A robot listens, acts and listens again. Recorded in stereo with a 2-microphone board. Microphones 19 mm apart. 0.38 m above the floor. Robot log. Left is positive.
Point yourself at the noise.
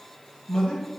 note: The man speaking: about 50° left or 130° left.
cmd yaw +50
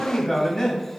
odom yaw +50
note: So it is at 30° left.
cmd yaw +30
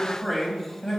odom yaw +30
note: The man speaking is now 25° left.
cmd yaw +25
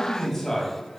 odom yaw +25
note: The man speaking is now 20° left.
cmd yaw +20
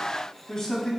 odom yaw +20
note: The man speaking is now 25° left.
cmd yaw +25
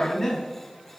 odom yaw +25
note: The man speaking is now 15° left.
cmd yaw +15
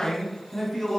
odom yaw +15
end: Found it: a man speaking, straight ahead.